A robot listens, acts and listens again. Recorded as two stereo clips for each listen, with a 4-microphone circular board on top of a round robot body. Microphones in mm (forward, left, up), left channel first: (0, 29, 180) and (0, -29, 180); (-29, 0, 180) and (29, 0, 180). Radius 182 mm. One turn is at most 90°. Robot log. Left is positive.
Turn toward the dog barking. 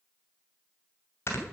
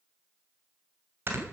cmd idle
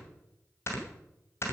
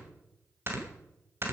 cmd idle
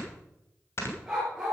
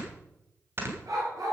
note: The dog barking: 10° right.
cmd yaw -10
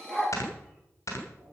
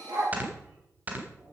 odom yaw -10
end: Found it: a dog barking, straight ahead, over 4 m away.